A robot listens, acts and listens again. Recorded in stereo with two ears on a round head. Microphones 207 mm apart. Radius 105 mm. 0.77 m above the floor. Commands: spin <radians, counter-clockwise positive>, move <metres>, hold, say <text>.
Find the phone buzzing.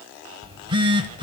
spin -0.35
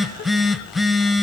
say Facing the phone buzzing.